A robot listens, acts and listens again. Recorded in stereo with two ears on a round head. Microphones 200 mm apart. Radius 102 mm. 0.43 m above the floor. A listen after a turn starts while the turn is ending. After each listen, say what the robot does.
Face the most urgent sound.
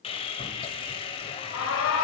Turn 60° left.
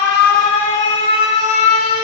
Turn 30° left.
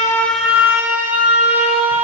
Turn 10° right.
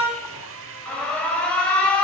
Facing the alarm.